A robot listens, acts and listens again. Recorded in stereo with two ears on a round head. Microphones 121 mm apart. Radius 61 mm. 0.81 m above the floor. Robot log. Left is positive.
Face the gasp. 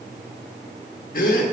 note: The gasp: about 70° left or 110° left.
cmd yaw +70
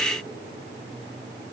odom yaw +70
cmd idle
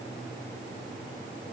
end: I heard a gasp, but can't make it out now. It was about straight ahead or 40° left.